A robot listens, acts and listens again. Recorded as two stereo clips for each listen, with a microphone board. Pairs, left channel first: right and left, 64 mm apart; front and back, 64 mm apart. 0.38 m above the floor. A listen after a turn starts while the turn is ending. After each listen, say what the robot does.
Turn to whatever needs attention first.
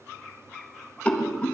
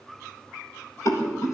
Keep listening.
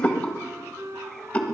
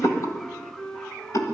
Keep listening.
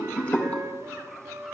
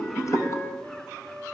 I can't make out anything urgent to turn to.